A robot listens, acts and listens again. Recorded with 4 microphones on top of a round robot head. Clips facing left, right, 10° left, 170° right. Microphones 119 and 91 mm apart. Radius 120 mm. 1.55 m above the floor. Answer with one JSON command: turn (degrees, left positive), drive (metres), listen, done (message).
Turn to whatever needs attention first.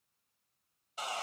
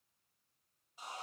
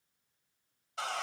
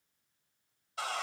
{"listen": true}
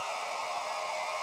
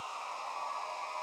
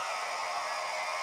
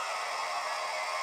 {"listen": true}
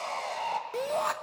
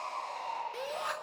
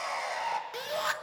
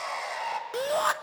{"turn": 145}
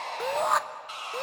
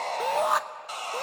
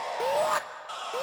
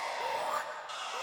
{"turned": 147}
{"done": "Found it: a shout, straight ahead, 1 to 2 m away."}